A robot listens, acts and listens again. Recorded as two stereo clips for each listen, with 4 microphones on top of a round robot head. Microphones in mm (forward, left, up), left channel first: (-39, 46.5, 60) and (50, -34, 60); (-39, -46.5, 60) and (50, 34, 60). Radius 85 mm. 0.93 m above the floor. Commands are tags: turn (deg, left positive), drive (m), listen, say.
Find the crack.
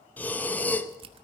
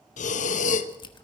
<turn deg="-85"/>
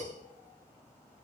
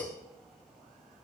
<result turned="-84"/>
<say>Facing where the crack came from. I can't hear it now.</say>